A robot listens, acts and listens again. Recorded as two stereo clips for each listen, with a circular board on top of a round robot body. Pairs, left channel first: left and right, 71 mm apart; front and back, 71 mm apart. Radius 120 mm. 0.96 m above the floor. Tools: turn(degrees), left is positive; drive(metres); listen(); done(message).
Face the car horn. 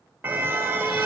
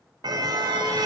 turn(degrees=-150)
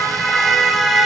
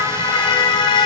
done("Facing the car horn, 2 to 4 m away.")